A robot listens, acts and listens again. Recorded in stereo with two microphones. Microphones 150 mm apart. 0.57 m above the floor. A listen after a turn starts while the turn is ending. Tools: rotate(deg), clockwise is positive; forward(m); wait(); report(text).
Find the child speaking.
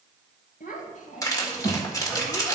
rotate(-60)
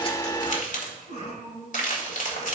rotate(-65)
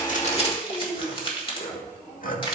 rotate(-20)
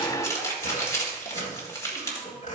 wait()
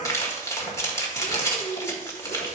report("Facing the child speaking.")